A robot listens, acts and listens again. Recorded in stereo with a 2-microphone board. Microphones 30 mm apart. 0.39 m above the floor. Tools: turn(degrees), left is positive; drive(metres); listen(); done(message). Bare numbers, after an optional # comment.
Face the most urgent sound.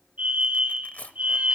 # The fire alarm: about 60° right or 120° right.
turn(-60)
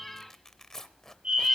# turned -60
# So it is at 45° right.
turn(-45)
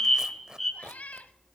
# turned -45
done("Found it: a fire alarm, straight ahead, 2 to 4 m away.")